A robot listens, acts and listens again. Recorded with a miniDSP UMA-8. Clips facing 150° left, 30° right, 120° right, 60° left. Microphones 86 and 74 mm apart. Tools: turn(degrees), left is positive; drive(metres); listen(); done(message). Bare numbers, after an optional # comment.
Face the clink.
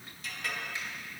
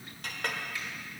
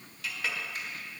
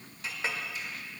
done("Facing the clink, 1 to 2 m away.")